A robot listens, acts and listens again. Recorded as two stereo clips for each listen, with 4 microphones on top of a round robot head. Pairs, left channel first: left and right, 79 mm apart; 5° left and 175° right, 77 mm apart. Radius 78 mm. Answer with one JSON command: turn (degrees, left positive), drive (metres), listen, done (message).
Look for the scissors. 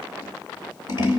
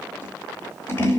{"turn": 60}
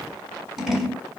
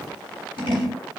{"done": "Found it: scissors, straight ahead, 2 to 4 m away."}